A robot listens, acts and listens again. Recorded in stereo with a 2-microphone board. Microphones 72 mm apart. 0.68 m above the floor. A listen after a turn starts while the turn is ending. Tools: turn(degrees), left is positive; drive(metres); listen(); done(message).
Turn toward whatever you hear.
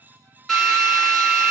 turn(degrees=30)
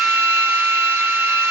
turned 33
turn(degrees=-30)
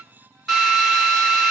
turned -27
done("Found it: a drill, straight ahead.")